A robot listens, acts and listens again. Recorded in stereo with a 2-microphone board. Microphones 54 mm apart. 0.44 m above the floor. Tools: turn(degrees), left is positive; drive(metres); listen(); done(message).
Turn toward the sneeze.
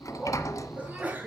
turn(degrees=-30)
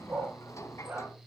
listen()
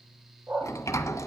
done("I heard a sneeze, but can't make it out now. It was about straight ahead or 120° right.")